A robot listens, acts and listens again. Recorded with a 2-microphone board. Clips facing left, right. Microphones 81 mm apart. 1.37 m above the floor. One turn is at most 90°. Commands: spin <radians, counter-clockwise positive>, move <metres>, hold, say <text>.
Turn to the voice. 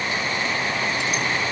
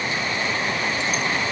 hold
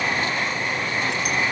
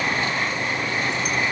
hold
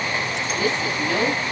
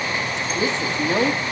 spin -0.44
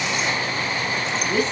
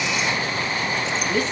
say Facing the woman speaking.